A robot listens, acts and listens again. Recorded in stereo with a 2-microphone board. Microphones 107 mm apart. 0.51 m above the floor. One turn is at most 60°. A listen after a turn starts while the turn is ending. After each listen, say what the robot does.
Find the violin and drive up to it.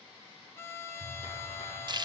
Turn 20° left.
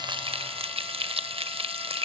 Keep listening.
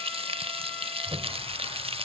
Keep listening.
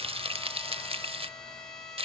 Drive 1.0 m forward.
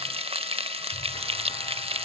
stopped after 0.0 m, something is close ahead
Keep listening.
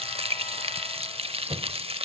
Keep listening.
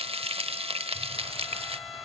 I heard a violin from this way, but can't make it out now. I did not reach it.